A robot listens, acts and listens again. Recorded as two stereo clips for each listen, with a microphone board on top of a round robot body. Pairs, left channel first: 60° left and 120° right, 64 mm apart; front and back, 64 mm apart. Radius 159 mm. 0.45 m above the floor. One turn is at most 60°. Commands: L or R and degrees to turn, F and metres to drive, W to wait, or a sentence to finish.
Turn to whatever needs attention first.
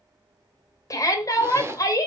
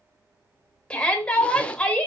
L60
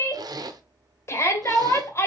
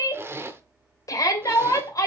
L20
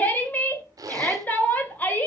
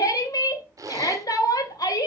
Facing the shout, 1 to 2 m away.